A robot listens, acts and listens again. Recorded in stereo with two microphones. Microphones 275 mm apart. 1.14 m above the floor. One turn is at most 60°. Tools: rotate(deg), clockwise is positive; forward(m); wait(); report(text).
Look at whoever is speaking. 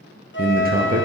rotate(35)
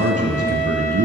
rotate(60)
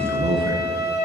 rotate(60)
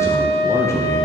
rotate(-10)
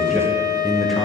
report("Found it: a man speaking, straight ahead.")